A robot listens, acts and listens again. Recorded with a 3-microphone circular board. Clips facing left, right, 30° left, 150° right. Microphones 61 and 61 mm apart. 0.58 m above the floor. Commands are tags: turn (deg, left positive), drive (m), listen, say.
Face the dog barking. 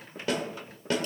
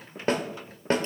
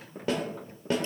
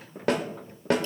<listen/>
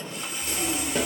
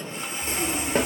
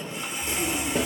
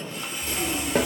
<turn deg="-65"/>
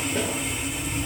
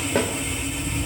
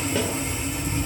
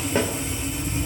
<turn deg="-20"/>
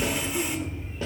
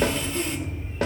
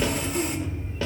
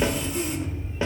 <say>Facing the dog barking, 2 to 4 m away.</say>